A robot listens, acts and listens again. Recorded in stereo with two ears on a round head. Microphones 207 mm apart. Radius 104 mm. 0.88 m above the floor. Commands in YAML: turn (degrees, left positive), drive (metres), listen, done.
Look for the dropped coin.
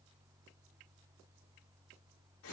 listen: true
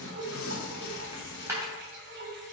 turn: -30
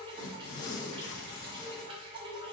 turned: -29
listen: true
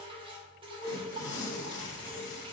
done: "I heard a dropped coin, but can't make it out now. It was about 15° left or 140° right."